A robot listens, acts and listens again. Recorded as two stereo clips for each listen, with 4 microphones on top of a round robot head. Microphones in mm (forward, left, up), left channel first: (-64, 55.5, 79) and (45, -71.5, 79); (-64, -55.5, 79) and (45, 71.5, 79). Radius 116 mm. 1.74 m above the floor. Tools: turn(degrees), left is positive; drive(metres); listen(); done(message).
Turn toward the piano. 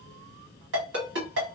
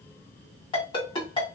listen()
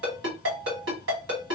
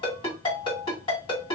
turn(degrees=-160)
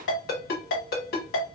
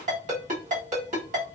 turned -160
listen()
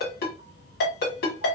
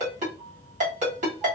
listen()
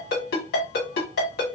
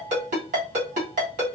done("I heard a piano from this way, but can't make it out now.")